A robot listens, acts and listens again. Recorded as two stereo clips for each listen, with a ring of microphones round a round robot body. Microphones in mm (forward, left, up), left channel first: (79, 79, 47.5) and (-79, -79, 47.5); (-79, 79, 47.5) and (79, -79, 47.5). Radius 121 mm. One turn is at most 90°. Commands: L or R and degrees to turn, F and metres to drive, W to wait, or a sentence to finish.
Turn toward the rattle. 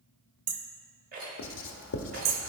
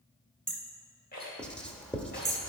L90
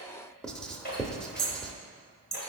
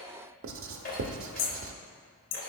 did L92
L85
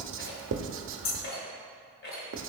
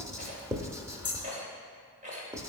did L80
L10
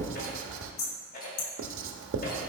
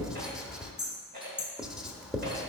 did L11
Found it: a rattle, straight ahead, 2 to 4 m away.